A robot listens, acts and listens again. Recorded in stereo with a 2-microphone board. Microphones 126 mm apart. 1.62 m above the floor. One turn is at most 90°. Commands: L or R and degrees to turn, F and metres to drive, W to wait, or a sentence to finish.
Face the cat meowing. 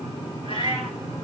L45
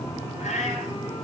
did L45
L90
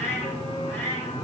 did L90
L20
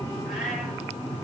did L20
W
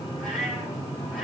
W
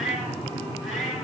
Facing the cat meowing, over 4 m away.